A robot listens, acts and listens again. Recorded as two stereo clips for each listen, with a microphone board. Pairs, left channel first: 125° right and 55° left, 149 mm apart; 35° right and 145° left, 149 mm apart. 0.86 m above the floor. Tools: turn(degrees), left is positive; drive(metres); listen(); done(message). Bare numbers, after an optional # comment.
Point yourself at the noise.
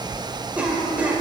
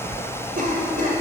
# The cough: 135° left.
turn(135)
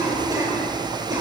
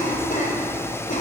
# The cough is now 10° right.
turn(-10)
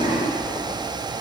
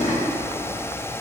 listen()
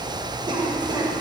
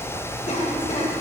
done("Facing the cough.")